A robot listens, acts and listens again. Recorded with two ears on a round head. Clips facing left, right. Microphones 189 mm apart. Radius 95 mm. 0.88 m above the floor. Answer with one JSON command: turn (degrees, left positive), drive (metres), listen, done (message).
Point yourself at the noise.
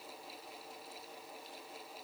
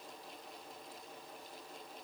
{"listen": true}
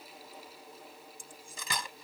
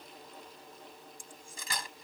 {"turn": 65}
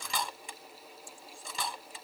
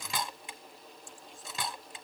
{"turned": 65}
{"done": "Found it: cutlery clinking, straight ahead."}